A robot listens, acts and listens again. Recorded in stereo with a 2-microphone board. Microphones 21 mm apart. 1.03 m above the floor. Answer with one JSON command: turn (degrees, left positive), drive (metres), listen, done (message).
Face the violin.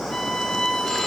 {"turn": 70}
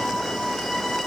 {"turn": 15}
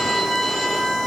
{"done": "Found it: a violin, straight ahead, 1 to 2 m away."}